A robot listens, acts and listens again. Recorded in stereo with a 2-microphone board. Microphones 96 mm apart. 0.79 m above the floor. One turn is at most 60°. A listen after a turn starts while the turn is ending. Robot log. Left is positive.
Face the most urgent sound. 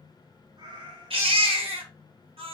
note: The baby crying: about 75° right or 105° right.
cmd yaw -60
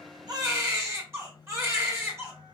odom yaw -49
note: So it is at 25° right.
cmd yaw -25
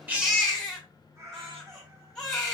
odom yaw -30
end: Found it: a baby crying, straight ahead, 1 to 2 m away.